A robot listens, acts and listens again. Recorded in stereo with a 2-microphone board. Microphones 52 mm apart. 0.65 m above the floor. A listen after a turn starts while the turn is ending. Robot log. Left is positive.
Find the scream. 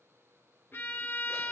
cmd idle
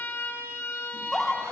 cmd yaw +30
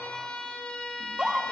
note: So it is at 20° right.
cmd yaw -20
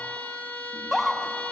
end: Facing the scream, 1 to 2 m away.